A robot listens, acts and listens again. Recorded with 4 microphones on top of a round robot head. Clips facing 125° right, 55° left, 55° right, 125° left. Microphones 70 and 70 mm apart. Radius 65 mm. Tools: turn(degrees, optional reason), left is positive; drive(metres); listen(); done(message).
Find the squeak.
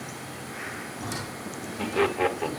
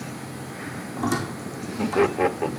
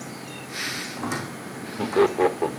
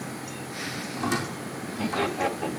turn(degrees=20, reason="The squeak: 20° left.")
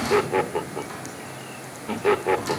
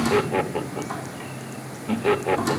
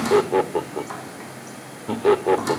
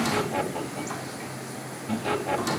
done("Facing the squeak.")